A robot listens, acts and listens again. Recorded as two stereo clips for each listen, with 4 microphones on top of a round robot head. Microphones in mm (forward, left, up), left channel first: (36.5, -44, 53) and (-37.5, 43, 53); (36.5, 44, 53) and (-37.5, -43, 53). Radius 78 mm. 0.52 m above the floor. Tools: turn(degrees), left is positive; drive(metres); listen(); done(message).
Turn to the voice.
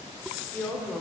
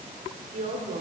turn(degrees=-125)
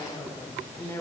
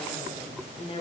turn(degrees=20)
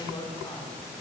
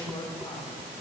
done("Found it: a woman speaking, straight ahead, 1 to 2 m away.")